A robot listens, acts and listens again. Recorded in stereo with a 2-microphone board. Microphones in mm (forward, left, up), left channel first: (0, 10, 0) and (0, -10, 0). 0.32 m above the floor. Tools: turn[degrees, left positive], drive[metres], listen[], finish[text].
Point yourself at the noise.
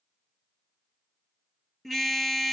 Action: turn[30]
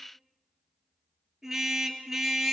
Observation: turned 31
Thought: So it is at 25° right.
Action: turn[-25]
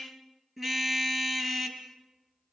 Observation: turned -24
Action: finish[Facing the car horn, 2 to 4 m away.]